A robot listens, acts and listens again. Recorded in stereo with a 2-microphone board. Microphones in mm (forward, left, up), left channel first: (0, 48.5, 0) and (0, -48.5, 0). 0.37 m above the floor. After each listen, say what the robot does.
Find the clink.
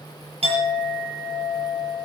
Turn 90° right.
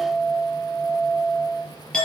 Facing the clink, over 4 m away.